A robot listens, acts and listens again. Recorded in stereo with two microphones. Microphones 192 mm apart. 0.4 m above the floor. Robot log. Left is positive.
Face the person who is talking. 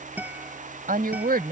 note: The woman speaking: about 50° right or 130° right.
cmd yaw -50
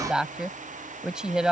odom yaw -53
end: Found it: a woman speaking, straight ahead.